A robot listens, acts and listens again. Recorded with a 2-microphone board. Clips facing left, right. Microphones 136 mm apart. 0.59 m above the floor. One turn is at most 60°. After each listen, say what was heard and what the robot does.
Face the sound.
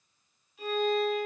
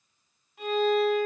The violin: about 70° right or 110° right. Turn 60° right.
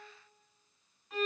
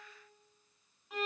So it is at 10° right. Turn 10° right.
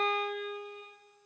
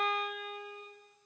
Facing the violin.